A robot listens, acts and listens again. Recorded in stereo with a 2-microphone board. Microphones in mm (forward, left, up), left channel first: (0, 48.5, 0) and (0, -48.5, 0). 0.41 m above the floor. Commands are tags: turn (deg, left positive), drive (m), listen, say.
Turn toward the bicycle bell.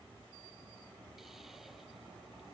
<listen/>
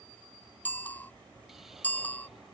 <turn deg="15"/>
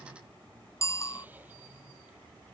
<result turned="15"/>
<turn deg="150"/>
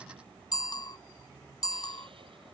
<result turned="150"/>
<turn deg="45"/>
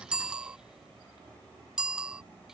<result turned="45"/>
<turn deg="-10"/>
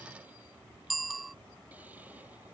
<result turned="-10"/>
<say>Found it: a bicycle bell, straight ahead.</say>